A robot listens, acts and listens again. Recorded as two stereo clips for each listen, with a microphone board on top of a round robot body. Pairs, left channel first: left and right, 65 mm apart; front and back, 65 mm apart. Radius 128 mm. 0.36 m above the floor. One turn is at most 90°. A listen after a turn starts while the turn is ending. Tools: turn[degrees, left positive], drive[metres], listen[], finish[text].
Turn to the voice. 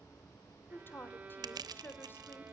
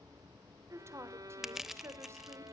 Thought: The woman speaking: 140° left.
Action: turn[90]
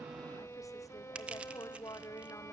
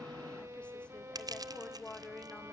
Thought: The woman speaking is now 70° left.
Action: turn[70]
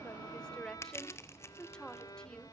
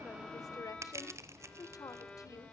Thought: The woman speaking is now 10° left.
Action: turn[10]
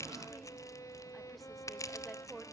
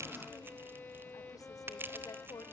Action: finish[Found it: a woman speaking, straight ahead, 1 to 2 m away.]